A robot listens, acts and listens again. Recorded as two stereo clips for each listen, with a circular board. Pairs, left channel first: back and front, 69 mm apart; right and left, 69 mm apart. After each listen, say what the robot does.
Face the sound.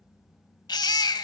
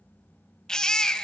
Turn 170° right.
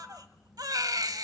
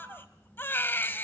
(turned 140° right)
Turn 30° right.
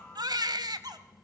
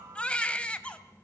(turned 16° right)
Turn 15° right.
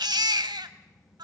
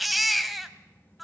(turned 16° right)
Found it: a baby crying, straight ahead, 1 to 2 m away.